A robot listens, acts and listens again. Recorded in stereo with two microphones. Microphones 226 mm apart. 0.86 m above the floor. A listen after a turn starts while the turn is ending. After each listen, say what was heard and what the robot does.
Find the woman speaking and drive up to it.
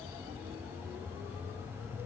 Keep listening.
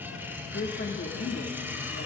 The woman speaking: about 55° left or 125° left. Turn 55° left.
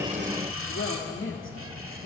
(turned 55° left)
So it is at 65° left. Turn 65° left.
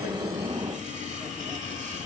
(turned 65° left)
Keep listening.
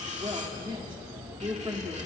The woman speaking is now 20° right. Turn 20° right.
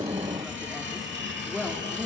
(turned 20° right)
Drive 1.0 m forward.
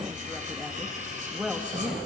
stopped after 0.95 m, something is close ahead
I am next to the woman speaking.